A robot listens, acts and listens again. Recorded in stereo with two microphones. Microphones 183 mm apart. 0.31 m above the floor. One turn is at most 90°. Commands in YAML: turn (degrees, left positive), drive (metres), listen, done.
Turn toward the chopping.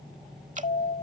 listen: true
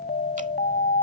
listen: true
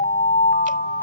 done: "I can't make out chopping, only an alarm."